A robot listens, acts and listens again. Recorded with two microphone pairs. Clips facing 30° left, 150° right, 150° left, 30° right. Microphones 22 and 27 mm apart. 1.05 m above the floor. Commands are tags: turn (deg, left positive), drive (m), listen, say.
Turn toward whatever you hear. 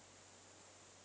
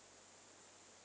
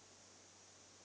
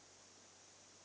<listen/>
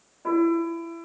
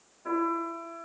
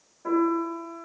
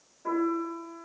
<turn deg="80"/>
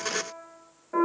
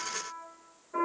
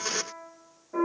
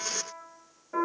<turn deg="10"/>
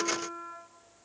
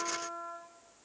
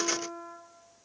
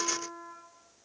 <say>Facing the piano, 1 to 2 m away.</say>